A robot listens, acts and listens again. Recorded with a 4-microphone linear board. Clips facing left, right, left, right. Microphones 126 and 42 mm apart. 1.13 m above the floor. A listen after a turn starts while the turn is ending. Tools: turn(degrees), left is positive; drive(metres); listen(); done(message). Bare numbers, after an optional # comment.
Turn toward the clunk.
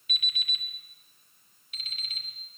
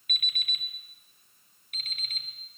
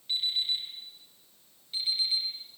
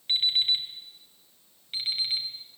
listen()
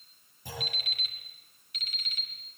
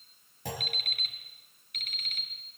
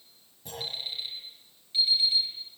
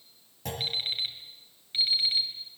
turn(-90)
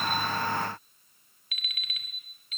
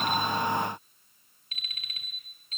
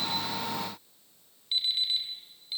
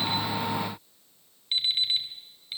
done("Facing where the clunk came from. I can't hear it now.")